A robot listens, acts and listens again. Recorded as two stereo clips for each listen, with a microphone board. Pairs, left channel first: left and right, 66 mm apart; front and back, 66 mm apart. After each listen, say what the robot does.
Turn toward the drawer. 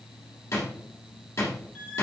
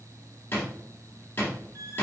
Turn 50° left.
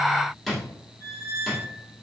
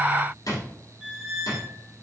Facing the drawer.